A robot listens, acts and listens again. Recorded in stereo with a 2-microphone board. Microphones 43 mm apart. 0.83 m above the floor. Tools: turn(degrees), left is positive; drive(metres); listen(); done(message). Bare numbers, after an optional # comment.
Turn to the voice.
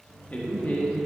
# The man speaking: about 40° left or 140° left.
turn(40)
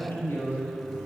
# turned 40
# So it is at 95° left.
turn(95)
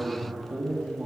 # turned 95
# The man speaking is now 25° right.
turn(-25)
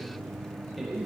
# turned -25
done("Found it: a man speaking, straight ahead, 1 to 2 m away.")